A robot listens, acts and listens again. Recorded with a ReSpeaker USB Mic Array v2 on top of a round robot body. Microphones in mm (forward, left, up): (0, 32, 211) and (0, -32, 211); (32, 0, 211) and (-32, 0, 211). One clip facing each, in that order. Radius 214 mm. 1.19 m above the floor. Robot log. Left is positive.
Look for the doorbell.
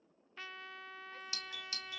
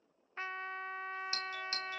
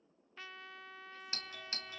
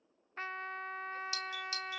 note: The doorbell: 45° right.
cmd yaw -45
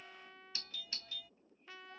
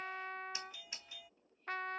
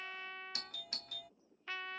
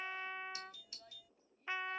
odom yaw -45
note: The doorbell is now 20° right.
cmd yaw -20
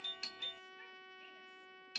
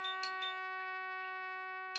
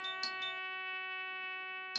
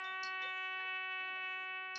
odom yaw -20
end: Facing the doorbell.